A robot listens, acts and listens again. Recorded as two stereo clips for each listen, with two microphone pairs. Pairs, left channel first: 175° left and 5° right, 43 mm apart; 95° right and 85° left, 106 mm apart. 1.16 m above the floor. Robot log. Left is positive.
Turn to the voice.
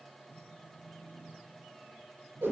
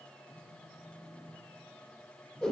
cmd idle
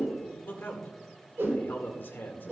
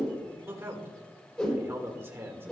note: The man speaking: 150° left.
cmd yaw +150
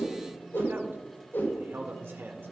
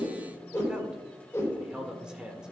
end: Facing the man speaking.